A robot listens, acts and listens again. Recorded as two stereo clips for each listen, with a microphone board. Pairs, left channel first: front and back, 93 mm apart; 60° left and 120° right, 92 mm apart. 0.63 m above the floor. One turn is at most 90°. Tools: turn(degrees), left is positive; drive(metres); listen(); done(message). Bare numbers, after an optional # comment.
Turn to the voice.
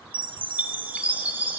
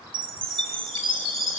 listen()
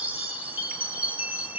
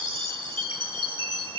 listen()
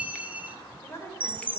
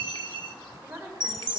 # The woman speaking: 55° right.
turn(-55)
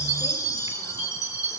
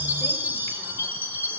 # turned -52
listen()
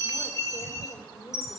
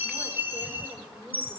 # The woman speaking is now 35° right.
turn(-35)
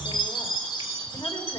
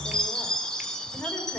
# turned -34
listen()
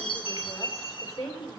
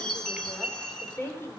done("Found it: a woman speaking, straight ahead, 2 to 4 m away.")